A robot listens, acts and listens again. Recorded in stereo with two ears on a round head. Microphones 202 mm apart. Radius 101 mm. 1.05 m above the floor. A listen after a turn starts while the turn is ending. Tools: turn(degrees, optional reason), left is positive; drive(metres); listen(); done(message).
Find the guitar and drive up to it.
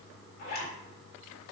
listen()
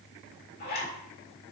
listen()
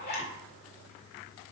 done("I can't make out a guitar, only a zipper.")